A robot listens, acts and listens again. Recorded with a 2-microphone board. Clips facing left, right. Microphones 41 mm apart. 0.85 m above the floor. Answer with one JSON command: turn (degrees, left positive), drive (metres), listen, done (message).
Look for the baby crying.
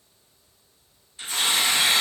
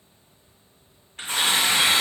{"listen": true}
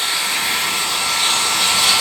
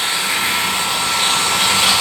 {"listen": true}
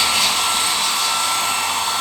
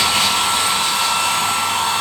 {"done": "I can't make out a baby crying, only tearing paper and a hair dryer."}